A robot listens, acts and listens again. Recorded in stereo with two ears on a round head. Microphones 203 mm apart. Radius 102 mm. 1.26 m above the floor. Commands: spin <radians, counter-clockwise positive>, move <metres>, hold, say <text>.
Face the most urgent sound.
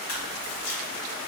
hold
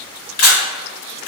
hold
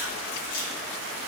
say I can't make out anything urgent, only a camera shutter.